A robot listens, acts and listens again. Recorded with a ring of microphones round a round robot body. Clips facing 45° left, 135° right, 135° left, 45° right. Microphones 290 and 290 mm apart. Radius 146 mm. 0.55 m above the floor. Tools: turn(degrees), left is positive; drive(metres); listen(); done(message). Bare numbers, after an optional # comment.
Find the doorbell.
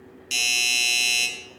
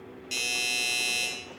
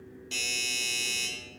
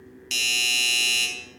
# The doorbell: 15° right.
turn(-15)
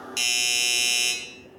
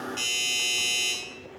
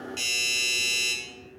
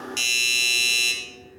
done("Found it: a doorbell, straight ahead, 2 to 4 m away.")